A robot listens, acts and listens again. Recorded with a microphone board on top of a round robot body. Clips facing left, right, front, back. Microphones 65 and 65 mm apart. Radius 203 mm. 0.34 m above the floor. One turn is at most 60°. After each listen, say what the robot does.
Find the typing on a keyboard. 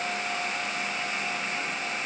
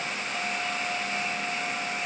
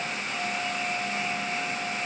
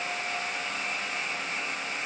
Keep listening.
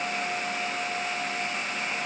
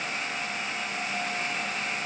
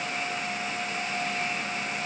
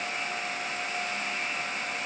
Keep listening.
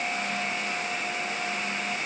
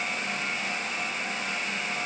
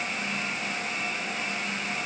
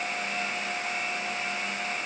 I can't make out typing on a keyboard.